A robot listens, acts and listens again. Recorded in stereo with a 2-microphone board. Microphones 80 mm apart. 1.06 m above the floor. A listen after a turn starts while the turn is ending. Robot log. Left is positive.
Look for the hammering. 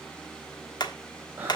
note: The hammering: about 60° left or 120° left.
cmd yaw +60
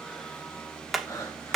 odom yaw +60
end: Facing the hammering.